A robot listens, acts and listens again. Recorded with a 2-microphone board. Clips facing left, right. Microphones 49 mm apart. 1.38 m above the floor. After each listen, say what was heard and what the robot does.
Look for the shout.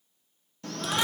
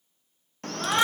The shout: about 50° right or 130° right. Turn 50° right.
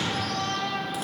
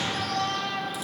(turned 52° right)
Found it: a shout, straight ahead.